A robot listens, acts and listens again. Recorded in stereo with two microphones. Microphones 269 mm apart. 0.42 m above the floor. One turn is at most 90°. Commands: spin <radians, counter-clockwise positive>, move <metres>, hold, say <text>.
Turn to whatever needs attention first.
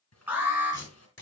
spin -0.52
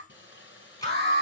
spin -1.57
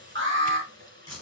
spin -0.87
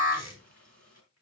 spin -0.52
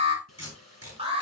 spin -0.35
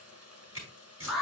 say Facing the alarm, 2 to 4 m away.